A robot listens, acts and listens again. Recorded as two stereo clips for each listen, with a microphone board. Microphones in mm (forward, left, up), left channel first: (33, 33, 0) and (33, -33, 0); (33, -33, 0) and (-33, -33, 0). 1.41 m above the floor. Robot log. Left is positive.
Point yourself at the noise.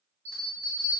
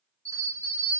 note: The bell: 145° right.
cmd yaw -145
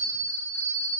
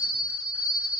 note: The bell is now 55° right.
cmd yaw -55
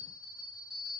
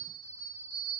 note: The bell is now 10° right.
cmd yaw -10
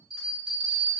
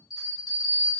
end: Found it: a bell, straight ahead.